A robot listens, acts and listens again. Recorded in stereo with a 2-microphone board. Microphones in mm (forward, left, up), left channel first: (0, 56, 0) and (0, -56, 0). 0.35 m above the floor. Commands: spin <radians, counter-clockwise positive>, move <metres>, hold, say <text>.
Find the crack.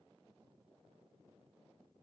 hold
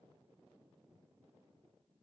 hold
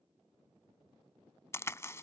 spin 0.44
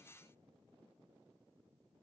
hold
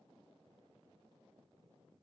say I heard a crack, but can't make it out now. It was about straight ahead or 130° left.